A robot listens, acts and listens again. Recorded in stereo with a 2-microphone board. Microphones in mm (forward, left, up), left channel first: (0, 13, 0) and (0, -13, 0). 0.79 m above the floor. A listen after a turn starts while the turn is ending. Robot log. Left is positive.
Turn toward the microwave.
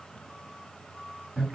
cmd idle
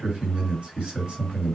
cmd idle
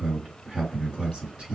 end: I can't make out a microwave to turn to.